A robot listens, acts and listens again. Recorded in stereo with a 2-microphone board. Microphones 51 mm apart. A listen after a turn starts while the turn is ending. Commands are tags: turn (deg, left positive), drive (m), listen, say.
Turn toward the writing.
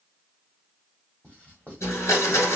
<turn deg="25"/>
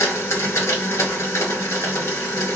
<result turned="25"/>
<listen/>
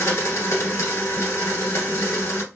<listen/>
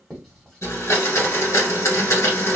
<turn deg="10"/>
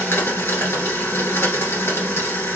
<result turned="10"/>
<listen/>
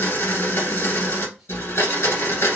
<listen/>
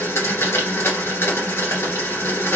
<say>I heard writing from this way, but can't make it out now.</say>